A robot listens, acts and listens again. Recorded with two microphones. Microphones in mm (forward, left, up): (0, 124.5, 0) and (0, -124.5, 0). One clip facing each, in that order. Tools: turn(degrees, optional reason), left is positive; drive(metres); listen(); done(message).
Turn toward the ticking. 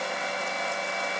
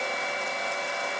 listen()
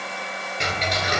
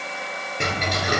turn(degrees=-55, reason="The ticking: about 55° right or 125° right.")
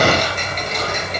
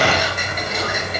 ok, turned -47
turn(degrees=-10, reason="So it is at 10° right.")
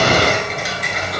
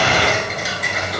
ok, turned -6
done("Facing the ticking.")